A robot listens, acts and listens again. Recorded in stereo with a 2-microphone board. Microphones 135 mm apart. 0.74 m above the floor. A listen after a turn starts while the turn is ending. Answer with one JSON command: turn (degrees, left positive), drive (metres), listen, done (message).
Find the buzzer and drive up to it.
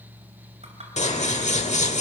{"listen": true}
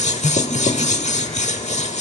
{"listen": true}
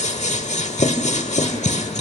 {"done": "I can't make out a buzzer, only scissors."}